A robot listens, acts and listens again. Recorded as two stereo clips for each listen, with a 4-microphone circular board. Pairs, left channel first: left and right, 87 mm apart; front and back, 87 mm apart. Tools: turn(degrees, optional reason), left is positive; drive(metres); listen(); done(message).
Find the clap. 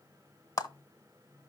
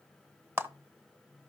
turn(degrees=125, reason="The clap: 125° left.")
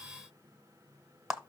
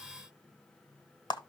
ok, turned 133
turn(degrees=-10, reason="The clap is now 10° right.")
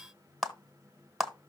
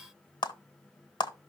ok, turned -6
done("Found it: a clap, straight ahead, 1 to 2 m away.")